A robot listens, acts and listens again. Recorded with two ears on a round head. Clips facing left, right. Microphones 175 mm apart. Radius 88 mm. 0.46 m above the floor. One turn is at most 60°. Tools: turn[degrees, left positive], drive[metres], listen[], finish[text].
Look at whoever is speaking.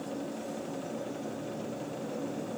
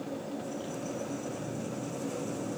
Action: listen[]
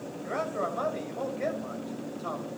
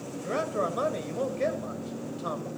Thought: The man speaking: about 50° right or 130° right.
Action: turn[-50]
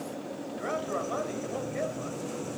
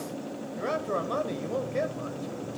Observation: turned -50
Thought: So it is at 70° right.
Action: turn[-60]
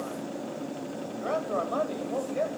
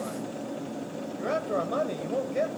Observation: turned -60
Thought: The man speaking is now 30° right.
Action: turn[-30]
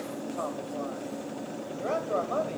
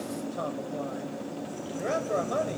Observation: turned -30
Thought: The man speaking is now 20° right.
Action: turn[-20]
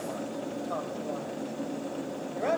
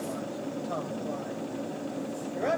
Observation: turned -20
Action: finish[Facing the man speaking.]